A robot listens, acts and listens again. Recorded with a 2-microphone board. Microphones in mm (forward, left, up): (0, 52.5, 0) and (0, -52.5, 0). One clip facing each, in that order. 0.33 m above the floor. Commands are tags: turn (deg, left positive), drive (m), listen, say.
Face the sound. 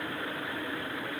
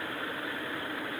<listen/>
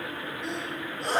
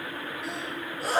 <turn deg="-30"/>
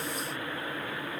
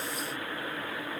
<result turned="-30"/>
<listen/>
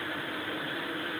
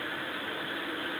<say>I heard a sneeze, but can't make it out now. It was about 25° left or 145° right.</say>